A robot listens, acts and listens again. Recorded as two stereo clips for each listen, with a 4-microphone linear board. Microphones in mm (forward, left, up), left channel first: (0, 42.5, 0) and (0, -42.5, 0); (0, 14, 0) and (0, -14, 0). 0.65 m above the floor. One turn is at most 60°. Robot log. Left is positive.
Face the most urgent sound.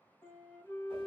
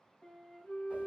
cmd idle
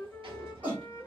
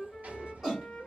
note: The shout: about 20° right or 160° right.
cmd yaw -20
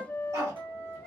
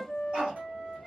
cmd idle
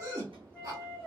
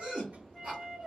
note: So it is at 140° right.
cmd yaw -60
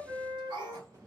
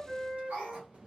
note: The shout is now 100° right.
cmd yaw -60
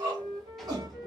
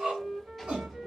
note: The shout is now 60° right.
cmd yaw -60
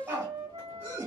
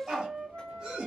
note: The shout is now 25° right.
cmd yaw -25
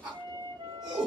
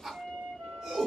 note: The shout is now 10° right.
cmd yaw -10
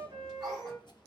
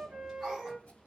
cmd idle
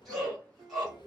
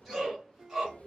end: Found it: a shout, straight ahead, 1 to 2 m away.